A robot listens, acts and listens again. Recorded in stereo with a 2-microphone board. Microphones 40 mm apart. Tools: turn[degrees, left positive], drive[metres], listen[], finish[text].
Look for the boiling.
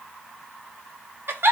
Action: listen[]
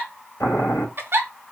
Thought: The boiling: about 70° left or 110° left.
Action: turn[70]
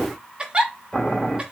Action: finish[Facing the boiling.]